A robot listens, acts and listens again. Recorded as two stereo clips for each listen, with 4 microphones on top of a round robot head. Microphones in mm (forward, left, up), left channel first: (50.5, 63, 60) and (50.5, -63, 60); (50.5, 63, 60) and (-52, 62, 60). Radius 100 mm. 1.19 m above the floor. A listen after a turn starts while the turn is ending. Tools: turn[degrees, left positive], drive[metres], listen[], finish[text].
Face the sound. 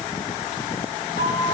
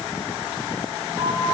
Thought: The flute: 110° right.
Action: turn[-110]
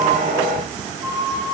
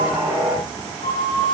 Thought: The flute is now 25° right.
Action: turn[-25]
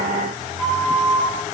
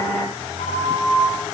Action: finish[Facing the flute, 2 to 4 m away.]